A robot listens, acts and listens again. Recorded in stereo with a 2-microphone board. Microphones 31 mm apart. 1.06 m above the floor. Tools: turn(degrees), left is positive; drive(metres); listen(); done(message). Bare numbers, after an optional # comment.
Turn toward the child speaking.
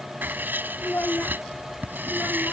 # The child speaking: about 70° left or 110° left.
turn(70)
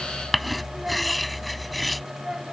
# So it is at 20° right.
turn(-20)
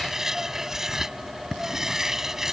listen()
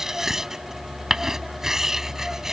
listen()
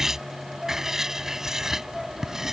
done("Found it: a child speaking, straight ahead.")